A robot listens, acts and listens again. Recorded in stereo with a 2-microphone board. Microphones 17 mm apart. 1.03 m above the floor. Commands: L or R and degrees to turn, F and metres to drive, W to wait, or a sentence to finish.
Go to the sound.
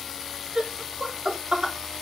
R55
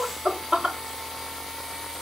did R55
R65
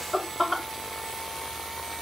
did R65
R15
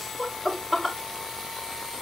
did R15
F1.0
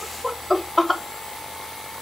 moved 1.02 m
F1.0
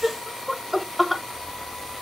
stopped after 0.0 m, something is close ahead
Arrived at the laughter, straight ahead.